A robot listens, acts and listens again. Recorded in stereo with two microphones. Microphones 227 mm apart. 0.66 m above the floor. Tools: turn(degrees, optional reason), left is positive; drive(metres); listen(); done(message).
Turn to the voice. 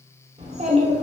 turn(degrees=-30, reason="The child speaking: about 30° right or 150° right.")
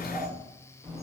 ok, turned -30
done("Facing the child speaking, 1 to 2 m away.")